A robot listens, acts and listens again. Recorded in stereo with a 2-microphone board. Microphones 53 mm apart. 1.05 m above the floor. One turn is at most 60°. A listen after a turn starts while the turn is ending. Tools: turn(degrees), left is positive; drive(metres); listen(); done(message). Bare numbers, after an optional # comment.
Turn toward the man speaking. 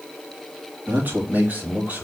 # The man speaking: about 30° right or 150° right.
turn(-30)
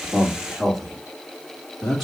# So it is at 10° left.
turn(10)
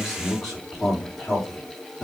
done("Facing the man speaking.")